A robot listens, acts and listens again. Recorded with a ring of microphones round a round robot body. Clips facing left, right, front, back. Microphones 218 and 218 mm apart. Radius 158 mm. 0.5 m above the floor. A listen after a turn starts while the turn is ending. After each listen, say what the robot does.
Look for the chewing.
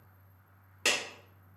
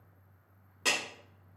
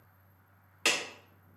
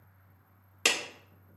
Keep listening.
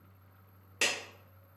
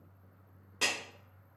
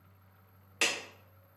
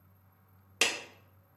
Keep listening.
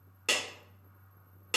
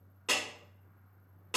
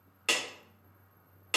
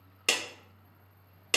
I can't make out chewing to turn to.